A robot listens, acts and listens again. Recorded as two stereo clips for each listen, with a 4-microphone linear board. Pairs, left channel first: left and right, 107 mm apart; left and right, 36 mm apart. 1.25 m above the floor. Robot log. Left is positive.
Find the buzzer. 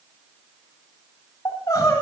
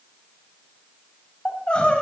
cmd idle
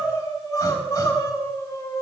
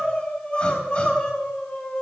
cmd idle
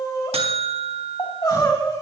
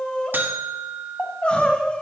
note: The buzzer: about 70° right or 110° right.
cmd yaw -70
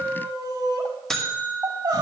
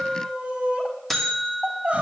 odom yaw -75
end: Facing the buzzer, 2 to 4 m away.